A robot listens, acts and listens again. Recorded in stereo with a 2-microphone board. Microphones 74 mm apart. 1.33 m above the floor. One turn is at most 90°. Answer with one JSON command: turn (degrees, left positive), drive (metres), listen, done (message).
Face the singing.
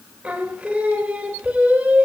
{"turn": -15}
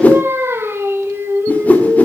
{"turn": -90}
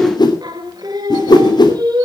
{"turn": -85}
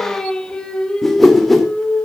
{"turn": 10}
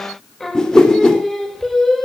{"done": "Found it: singing, straight ahead."}